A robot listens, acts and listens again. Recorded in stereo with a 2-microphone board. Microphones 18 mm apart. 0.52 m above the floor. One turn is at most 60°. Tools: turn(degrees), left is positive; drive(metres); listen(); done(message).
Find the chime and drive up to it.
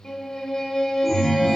turn(degrees=-30)
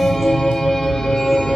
drive(metres=1.0)
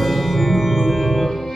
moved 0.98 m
drive(metres=1.0)
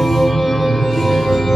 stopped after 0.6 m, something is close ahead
turn(degrees=10)
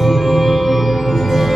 done("Arrived at the chime, straight ahead.")